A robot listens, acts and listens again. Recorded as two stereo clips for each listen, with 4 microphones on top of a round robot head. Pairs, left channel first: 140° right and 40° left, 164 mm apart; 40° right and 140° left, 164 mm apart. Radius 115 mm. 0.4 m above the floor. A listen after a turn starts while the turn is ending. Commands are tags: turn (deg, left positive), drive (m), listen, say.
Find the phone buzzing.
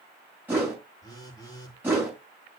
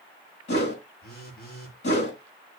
<turn deg="-70"/>
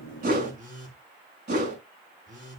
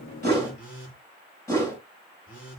<say>Found it: a phone buzzing, straight ahead, over 4 m away.</say>